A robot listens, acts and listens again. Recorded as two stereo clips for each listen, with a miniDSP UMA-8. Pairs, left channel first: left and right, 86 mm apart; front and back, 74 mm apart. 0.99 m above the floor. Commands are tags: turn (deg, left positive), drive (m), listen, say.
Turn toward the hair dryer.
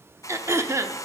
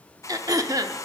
<turn deg="40"/>
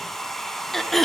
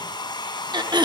<say>Facing the hair dryer, under 1 m away.</say>